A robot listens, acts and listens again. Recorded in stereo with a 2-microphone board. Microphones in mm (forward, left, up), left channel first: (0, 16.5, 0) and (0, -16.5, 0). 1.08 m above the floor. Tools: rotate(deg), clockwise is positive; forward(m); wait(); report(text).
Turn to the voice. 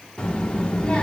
rotate(-25)
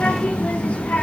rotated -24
rotate(-130)
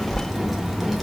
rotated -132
report("Found it: a child speaking, straight ahead.")